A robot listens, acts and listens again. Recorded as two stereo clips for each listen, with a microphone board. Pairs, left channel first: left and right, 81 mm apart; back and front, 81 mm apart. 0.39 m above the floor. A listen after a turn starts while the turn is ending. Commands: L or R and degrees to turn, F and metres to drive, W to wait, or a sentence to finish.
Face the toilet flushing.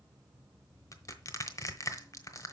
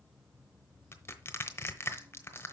W
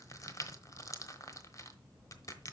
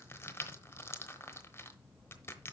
W
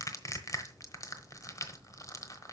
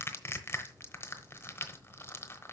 I can't make out a toilet flushing, only crushing.